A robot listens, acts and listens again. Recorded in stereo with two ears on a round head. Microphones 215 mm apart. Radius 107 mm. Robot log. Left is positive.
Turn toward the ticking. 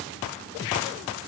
cmd idle
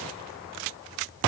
cmd idle
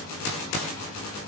end: I can't make out ticking to turn to.